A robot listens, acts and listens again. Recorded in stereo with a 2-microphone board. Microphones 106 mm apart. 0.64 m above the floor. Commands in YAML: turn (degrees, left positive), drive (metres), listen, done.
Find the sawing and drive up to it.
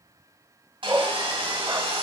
turn: -55
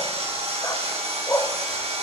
turn: -70
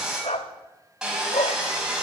drive: 1.0
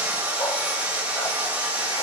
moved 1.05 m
turn: -15
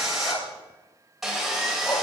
drive: 1.0
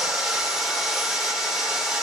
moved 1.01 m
drive: 1.0
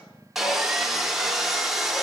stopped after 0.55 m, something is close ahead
done: "Arrived at the sawing, straight ahead."